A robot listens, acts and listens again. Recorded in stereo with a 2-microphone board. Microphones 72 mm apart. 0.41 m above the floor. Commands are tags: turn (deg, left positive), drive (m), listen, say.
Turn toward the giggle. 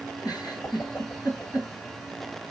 <turn deg="65"/>
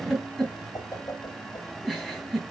<say>Found it: a giggle, straight ahead.</say>